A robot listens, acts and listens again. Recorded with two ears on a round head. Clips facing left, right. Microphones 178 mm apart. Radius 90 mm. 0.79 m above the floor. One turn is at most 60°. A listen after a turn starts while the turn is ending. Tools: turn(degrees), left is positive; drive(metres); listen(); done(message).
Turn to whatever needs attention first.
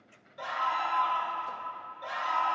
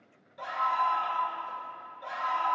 turn(degrees=30)
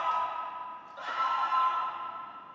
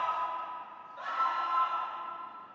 turn(degrees=60)
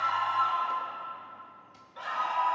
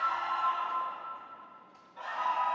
turn(degrees=60)
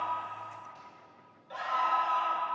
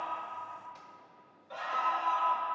turn(degrees=10)
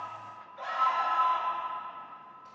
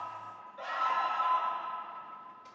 done("Found it: a scream, straight ahead.")